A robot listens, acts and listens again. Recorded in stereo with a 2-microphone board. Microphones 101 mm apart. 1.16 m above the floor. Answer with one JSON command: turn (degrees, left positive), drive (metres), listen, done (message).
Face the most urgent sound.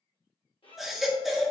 {"turn": 30}
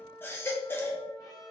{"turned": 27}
{"turn": 155}
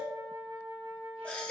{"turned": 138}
{"turn": 15}
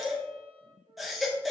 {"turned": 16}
{"done": "Found it: a baby crying, straight ahead."}